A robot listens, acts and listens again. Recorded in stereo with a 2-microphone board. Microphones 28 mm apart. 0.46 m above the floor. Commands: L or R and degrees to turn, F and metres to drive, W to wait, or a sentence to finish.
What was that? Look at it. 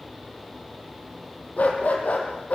L60
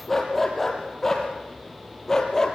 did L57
L20
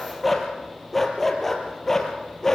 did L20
L10
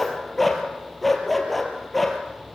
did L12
Facing the dog barking.